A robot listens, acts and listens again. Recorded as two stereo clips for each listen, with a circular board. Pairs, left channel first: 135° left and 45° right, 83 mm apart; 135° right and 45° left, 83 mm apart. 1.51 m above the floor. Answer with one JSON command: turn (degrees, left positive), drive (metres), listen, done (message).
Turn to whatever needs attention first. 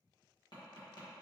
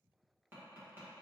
{"listen": true}
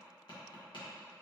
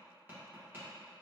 {"listen": true}
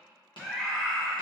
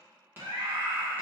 {"turn": 50}
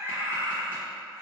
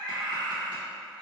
{"turn": 10}
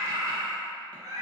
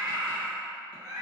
{"done": "Facing the scream, 1 to 2 m away."}